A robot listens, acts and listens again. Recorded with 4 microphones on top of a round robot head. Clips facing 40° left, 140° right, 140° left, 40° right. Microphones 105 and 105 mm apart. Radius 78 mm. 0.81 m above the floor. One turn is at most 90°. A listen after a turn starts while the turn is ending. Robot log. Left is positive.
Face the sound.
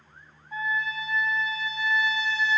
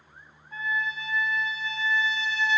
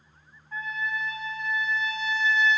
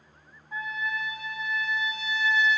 note: The trumpet: 40° left.
cmd yaw +40
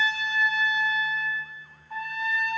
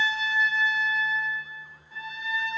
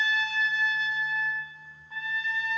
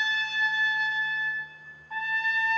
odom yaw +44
end: Found it: a trumpet, straight ahead.